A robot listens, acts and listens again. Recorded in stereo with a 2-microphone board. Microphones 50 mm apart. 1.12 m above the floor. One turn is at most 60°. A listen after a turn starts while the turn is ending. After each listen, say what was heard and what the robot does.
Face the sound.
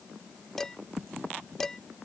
Turn 30° left.
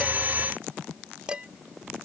So it is at 20° right. Turn 20° right.
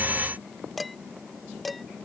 Facing the dishes clattering.